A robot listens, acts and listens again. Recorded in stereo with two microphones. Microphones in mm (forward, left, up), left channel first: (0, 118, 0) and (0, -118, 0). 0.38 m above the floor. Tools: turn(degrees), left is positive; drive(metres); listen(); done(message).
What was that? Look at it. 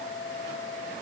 listen()
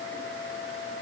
listen()
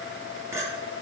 turn(degrees=-30)
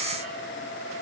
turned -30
listen()
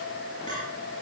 turn(degrees=20)
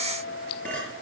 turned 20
done("Facing the clink, over 4 m away.")